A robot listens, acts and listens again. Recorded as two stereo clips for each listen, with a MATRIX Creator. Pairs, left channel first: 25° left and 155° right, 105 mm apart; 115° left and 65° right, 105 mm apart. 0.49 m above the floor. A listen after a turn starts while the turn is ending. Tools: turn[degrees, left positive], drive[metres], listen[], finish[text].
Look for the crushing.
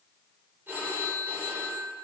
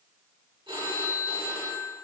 Action: listen[]
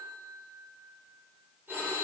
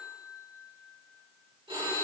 Action: listen[]
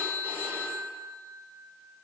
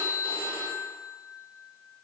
Action: finish[I can't make out crushing to turn to.]